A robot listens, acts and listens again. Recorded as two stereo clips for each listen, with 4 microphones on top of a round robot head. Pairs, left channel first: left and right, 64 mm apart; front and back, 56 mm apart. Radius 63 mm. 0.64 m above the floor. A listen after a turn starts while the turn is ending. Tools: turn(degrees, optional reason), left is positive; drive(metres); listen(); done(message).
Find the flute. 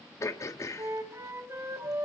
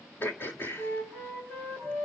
turn(degrees=-50, reason="The flute: 50° right.")
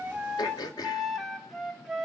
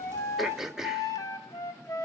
done("Facing the flute, 2 to 4 m away.")